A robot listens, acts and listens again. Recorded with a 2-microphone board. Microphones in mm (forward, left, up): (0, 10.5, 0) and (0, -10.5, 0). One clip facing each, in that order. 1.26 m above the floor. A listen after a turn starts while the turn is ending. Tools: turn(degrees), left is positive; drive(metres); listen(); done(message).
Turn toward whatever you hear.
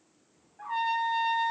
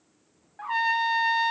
turn(degrees=-90)
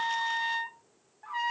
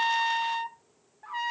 done("Facing the trumpet.")